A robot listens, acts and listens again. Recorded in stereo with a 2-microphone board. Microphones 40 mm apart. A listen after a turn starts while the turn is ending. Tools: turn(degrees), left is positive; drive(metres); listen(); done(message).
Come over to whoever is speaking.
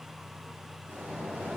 listen()
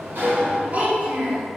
turn(degrees=-45)
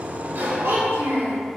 turn(degrees=-95)
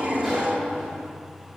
listen()
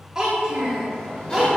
turn(degrees=-15)
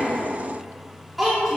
drive(metres=1.0)
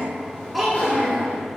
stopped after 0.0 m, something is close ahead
done("Something is in my way. I am facing the child speaking but have not reached it.")